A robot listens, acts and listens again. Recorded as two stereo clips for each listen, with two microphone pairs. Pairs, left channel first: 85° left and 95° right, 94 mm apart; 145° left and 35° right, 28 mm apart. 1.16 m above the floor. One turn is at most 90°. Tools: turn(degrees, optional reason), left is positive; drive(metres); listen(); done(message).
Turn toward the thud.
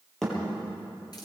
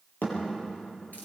turn(degrees=90, reason="The thud: 170° left.")
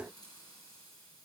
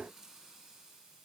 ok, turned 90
turn(degrees=80, reason="Nothing new. It was at 80° left.")
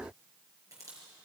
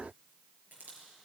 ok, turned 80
done("Facing where the thud came from. I can't hear it now.")